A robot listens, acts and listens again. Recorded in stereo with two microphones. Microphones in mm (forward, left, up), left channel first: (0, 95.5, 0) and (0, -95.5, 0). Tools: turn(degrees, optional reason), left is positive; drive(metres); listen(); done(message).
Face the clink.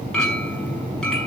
turn(degrees=30)
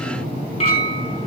turn(degrees=150, reason="So it is at 150° left.")
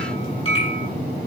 turn(degrees=30, reason="The clink is now 30° left.")
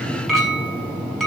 done("Found it: a clink, straight ahead.")